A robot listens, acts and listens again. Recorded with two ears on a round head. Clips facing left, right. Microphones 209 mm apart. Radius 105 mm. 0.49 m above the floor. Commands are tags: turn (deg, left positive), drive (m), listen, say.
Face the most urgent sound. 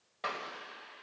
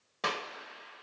<listen/>
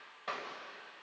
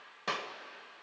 <listen/>
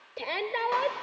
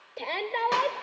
<turn deg="30"/>
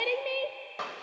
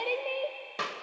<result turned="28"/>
<turn deg="145"/>
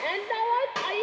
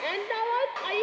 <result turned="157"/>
<turn deg="-10"/>
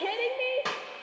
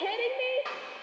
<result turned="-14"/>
<say>Found it: a shout, straight ahead, 1 to 2 m away.</say>